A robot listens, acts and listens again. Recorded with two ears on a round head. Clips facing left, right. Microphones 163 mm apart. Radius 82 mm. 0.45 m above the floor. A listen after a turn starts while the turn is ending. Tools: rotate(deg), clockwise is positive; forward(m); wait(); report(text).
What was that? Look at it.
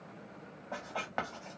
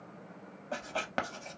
rotate(40)
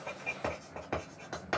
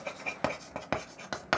rotate(100)
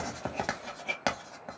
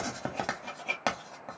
report("Facing the writing.")